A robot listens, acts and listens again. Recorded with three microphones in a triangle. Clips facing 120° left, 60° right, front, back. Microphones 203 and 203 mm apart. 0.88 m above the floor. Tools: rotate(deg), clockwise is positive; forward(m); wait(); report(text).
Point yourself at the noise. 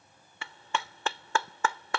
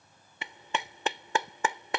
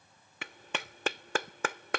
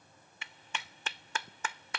rotate(-10)
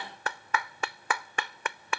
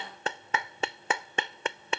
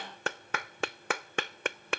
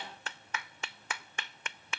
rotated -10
report("Found it: a clap, straight ahead.")